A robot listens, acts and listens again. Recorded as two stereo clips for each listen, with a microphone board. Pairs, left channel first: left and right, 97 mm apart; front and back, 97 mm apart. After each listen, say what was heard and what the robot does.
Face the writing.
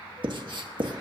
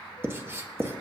The writing: 115° right. Turn 115° right.
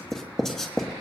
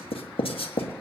Facing the writing.